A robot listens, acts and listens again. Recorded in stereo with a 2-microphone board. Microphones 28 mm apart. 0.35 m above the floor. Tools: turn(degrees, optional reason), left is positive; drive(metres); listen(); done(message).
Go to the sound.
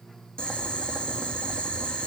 turn(degrees=35, reason="The boiling: about 35° left or 145° left.")
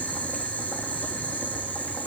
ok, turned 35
turn(degrees=110, reason="So it is at 110° left.")
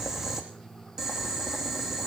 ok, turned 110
turn(degrees=-10, reason="The boiling is now 10° right.")
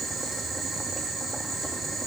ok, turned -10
drive(metres=1.0)
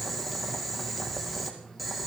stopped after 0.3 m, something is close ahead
done("Something is in my way. I am facing the boiling but have not reached it.")